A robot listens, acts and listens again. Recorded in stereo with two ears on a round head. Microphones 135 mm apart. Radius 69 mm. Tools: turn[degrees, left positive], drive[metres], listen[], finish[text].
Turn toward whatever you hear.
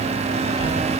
Action: turn[30]
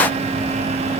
Action: listen[]
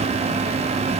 Action: listen[]
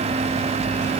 Thought: So it is at 30° right.
Action: turn[-30]
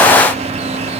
Action: listen[]
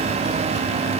Action: listen[]
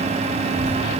Thought: The child speaking is now 40° right.
Action: turn[-40]
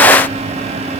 Action: finish[Facing the child speaking.]